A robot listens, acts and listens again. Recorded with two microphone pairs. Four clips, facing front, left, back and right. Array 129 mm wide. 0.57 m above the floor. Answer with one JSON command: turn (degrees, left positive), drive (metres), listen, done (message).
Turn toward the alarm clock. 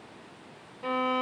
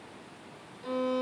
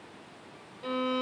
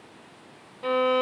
{"listen": true}
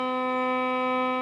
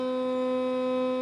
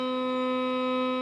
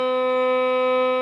{"listen": true}
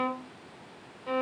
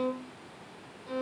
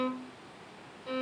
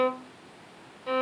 {"done": "I can't make out an alarm clock to turn to."}